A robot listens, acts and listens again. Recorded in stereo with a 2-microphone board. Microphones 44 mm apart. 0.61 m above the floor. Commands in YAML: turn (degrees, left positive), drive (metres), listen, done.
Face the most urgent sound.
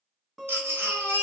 turn: -70
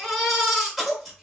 done: "Found it: a baby crying, straight ahead."